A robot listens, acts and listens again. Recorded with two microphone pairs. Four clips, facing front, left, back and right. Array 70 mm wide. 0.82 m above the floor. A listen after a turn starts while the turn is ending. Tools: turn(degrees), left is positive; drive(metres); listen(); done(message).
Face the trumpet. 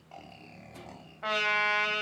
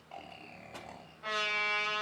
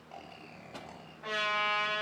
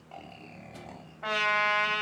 turn(degrees=-40)
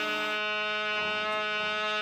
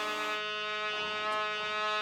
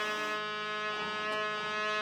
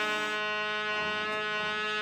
done("Found it: a trumpet, straight ahead.")